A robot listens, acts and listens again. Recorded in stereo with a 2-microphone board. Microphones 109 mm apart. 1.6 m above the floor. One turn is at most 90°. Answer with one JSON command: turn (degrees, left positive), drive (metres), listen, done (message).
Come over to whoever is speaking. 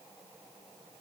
{"listen": true}
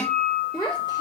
{"turn": 35}
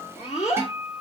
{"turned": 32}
{"turn": 90}
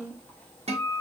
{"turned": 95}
{"turn": 15}
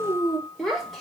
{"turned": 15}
{"drive": 1.0}
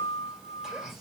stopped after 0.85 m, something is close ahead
{"listen": true}
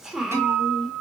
{"done": "Arrived at the child speaking, straight ahead."}